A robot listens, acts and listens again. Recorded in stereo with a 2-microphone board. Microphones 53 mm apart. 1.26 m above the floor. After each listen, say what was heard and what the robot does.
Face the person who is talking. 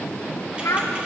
The child speaking: about 70° left or 110° left. Turn 70° left.
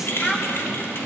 So it is at 20° left. Turn 20° left.
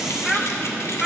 Facing the child speaking.